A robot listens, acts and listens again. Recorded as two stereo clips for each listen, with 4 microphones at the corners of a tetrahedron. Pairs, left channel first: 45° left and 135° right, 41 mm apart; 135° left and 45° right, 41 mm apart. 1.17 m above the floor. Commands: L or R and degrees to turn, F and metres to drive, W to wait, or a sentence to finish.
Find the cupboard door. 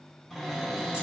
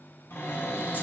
L130
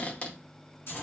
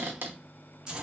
R10
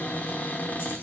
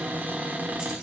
Facing the cupboard door, under 1 m away.